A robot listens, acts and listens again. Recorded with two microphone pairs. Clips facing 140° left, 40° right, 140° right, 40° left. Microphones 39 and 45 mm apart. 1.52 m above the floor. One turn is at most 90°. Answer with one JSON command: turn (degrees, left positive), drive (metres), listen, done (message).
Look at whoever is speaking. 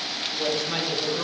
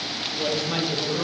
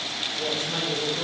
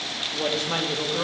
{"turn": 55}
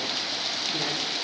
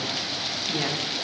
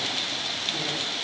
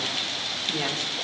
{"turn": 20}
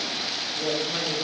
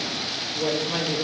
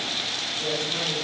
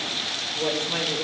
{"turn": 10}
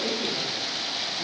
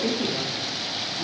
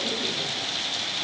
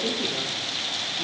{"done": "Facing the woman speaking, 2 to 4 m away."}